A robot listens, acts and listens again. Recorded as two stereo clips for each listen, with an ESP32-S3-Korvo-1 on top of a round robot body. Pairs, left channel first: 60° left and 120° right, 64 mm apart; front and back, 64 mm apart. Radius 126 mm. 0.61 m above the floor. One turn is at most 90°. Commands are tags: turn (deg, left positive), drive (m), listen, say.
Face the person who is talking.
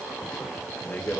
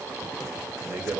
<turn deg="90"/>
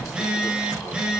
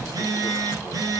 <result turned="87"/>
<turn deg="35"/>
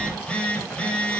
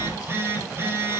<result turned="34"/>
<listen/>
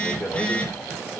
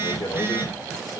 <say>Found it: a man speaking, straight ahead.</say>